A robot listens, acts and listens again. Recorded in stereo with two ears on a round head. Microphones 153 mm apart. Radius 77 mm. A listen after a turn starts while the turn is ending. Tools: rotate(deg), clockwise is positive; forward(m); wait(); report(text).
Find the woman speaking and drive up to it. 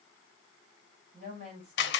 rotate(40)
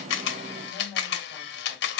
forward(1.0)
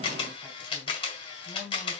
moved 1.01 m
forward(1.0)
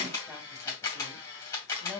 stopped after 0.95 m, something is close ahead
report("Arrived at the woman speaking, straight ahead.")